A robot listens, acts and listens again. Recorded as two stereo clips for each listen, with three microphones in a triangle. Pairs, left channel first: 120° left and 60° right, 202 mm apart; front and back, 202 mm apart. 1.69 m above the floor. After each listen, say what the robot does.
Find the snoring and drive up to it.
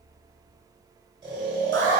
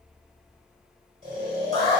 Turn 125° right.
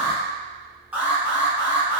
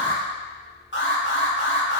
Keep listening.
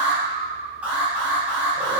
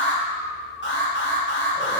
Turn 35° right.
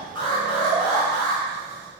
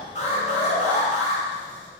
Drive 1.0 m forward.
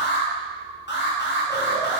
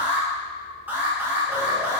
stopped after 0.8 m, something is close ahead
Keep listening.
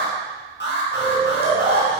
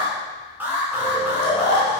Turn 15° right.
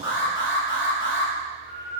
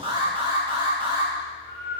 I am next to the snoring.